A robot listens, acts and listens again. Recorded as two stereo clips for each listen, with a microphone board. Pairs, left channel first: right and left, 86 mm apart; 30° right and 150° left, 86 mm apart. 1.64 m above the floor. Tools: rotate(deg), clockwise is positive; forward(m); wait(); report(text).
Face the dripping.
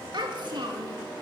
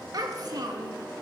wait()
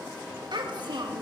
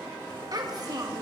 wait()
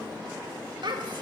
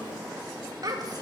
report("I can't make out dripping, only a child speaking.")